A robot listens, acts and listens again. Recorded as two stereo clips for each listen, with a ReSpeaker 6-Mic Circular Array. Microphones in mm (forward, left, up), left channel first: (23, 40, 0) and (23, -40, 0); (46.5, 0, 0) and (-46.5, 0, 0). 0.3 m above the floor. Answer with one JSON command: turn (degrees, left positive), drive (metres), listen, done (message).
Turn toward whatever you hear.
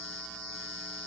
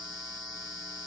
{"listen": true}
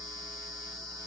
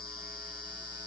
{"listen": true}
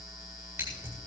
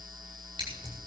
{"turn": -145}
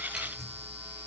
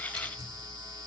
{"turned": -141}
{"listen": true}
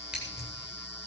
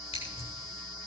{"listen": true}
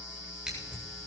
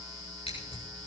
{"done": "Found it: scissors, straight ahead."}